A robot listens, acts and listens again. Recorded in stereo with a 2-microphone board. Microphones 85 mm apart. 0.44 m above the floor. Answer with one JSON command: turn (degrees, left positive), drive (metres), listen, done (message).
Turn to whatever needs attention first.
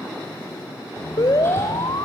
{"turn": 50}
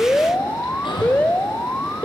{"turn": 15}
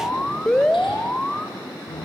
{"turn": 10}
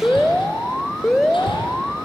{"done": "Found it: an alarm, straight ahead, 1 to 2 m away."}